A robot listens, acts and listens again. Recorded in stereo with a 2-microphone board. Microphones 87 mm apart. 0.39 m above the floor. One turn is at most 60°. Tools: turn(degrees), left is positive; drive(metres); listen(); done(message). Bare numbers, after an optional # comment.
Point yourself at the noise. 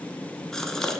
turn(30)
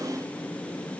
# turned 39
listen()
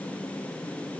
done("I heard a gasp, but can't make it out now. It was about 35° right or 135° left.")